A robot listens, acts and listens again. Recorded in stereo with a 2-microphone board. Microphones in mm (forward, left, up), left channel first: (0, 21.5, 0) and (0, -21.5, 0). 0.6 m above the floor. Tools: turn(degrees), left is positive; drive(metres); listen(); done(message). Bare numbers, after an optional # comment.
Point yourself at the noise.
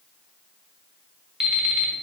# The alarm clock: about 20° right or 160° right.
turn(-20)
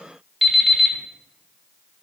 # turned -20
done("Facing the alarm clock.")